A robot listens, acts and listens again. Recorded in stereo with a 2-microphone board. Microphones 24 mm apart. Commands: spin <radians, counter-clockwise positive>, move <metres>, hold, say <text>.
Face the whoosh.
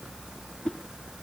spin 0.87
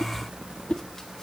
spin 1.13
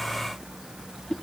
spin 0.26
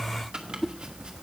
say Facing the whoosh.